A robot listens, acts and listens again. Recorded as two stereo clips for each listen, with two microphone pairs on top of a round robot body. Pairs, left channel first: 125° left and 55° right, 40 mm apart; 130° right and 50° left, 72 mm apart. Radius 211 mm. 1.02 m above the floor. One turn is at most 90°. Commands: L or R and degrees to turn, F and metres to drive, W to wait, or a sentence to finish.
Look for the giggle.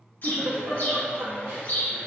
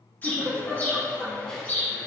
R40
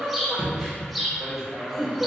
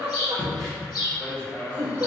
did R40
L15
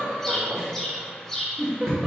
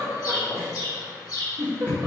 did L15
Found it: a giggle, straight ahead.